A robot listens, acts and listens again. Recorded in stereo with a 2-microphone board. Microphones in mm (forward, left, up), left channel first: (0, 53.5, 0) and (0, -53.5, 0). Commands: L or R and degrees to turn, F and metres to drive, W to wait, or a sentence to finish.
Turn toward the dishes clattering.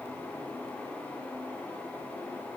W
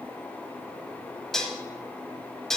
L30
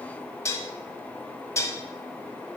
L145
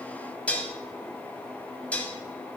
L15
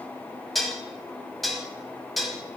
Found it: dishes clattering, straight ahead, 1 to 2 m away.